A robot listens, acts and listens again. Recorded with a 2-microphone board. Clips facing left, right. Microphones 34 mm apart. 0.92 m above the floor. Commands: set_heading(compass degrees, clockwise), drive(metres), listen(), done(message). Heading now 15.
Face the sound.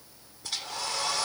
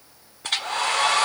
set_heading(75)
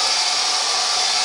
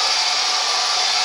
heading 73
done("Facing the hair dryer.")